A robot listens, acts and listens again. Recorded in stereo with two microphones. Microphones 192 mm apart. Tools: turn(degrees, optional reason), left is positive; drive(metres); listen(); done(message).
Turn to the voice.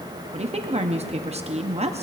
turn(degrees=-35, reason="The woman speaking: about 35° right or 145° right.")
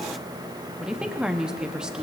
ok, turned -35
done("Found it: a woman speaking, straight ahead, under 1 m away.")